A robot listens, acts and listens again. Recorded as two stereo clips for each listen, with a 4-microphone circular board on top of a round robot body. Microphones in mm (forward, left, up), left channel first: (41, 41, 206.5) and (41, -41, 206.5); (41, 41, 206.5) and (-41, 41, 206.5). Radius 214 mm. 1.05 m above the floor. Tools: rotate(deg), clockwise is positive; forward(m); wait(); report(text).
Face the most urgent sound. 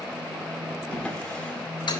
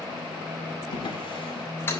wait()
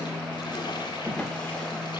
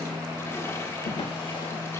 wait()
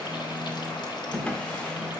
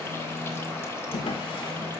report("I can't make out anything urgent, only a drawer.")